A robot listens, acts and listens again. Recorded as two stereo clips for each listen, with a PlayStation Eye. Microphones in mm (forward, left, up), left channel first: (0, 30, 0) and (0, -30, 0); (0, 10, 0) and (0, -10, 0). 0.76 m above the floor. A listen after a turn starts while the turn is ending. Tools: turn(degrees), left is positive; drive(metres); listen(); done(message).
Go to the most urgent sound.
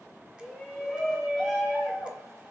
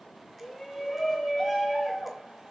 turn(degrees=30)
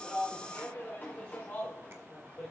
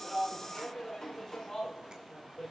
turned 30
turn(degrees=150)
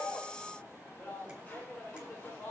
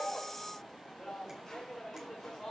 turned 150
turn(degrees=30)
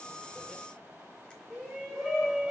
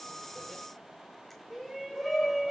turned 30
drive(metres=1.0)
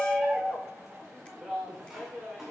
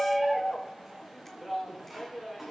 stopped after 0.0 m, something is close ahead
done("Something is in my way. I am facing the shout but have not reached it.")